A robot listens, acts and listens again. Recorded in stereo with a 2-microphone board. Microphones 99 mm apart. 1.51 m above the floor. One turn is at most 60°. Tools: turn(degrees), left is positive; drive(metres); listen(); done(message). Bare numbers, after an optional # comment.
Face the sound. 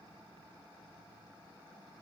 listen()
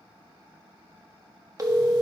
# The phone ringing: about 35° right or 145° right.
turn(-35)
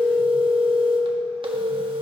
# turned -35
# So it is at 105° right.
turn(-60)
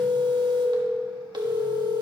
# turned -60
# The phone ringing is now 60° right.
turn(-60)
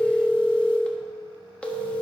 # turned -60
# The phone ringing is now 15° left.
turn(15)
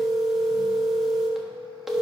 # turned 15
done("Facing the phone ringing, 1 to 2 m away.")